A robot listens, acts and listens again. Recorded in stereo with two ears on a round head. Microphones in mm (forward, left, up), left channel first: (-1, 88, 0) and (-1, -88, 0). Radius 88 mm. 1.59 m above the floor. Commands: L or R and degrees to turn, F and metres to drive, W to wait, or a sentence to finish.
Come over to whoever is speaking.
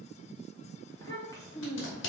L15
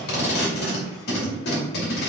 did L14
W
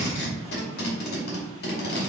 W
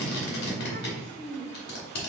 F1.0
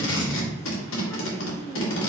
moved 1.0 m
L10
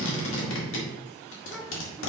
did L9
W
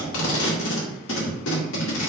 W
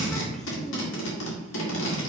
Facing where the child speaking came from. I can't hear it now. I did not reach it.